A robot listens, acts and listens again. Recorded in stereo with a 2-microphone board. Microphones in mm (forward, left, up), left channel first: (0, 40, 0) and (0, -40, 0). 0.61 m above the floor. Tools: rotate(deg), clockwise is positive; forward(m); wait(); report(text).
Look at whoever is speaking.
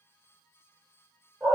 wait()
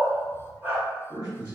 rotate(50)
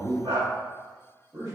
rotate(60)
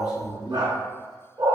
rotate(15)
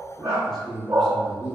report("Facing the man speaking.")